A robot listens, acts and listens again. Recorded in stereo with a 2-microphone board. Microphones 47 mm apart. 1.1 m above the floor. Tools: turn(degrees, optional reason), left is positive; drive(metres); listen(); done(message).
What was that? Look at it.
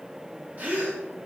turn(degrees=-35, reason="The gasp: about 35° right or 145° right.")
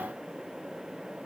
listen()
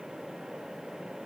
done("I heard a gasp, but can't make it out now. It was about straight ahead or 110° right.")